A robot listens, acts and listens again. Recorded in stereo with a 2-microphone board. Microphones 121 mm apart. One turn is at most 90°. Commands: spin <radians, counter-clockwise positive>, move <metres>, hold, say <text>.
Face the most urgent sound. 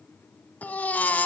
spin 0.52
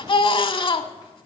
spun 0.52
spin 1.57
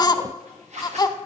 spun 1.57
spin 0.61
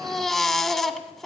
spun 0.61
say Facing the baby crying.